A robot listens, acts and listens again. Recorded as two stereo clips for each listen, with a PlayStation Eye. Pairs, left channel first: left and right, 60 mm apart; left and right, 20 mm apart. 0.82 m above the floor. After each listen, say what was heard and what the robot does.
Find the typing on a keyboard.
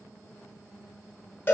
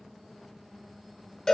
Keep listening.
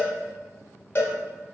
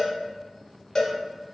Keep listening.
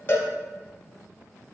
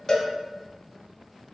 I can't make out typing on a keyboard to turn to.